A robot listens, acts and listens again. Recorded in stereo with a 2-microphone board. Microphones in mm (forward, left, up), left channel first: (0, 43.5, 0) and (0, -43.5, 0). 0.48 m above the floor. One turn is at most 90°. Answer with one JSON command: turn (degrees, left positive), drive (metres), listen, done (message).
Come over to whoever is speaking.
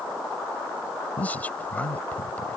{"turn": 20}
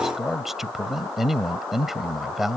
{"drive": 1.0}
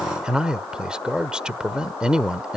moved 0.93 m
{"turn": -15}
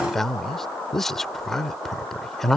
{"drive": 1.0}
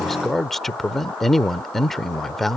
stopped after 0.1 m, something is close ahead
{"done": "I am next to the man speaking."}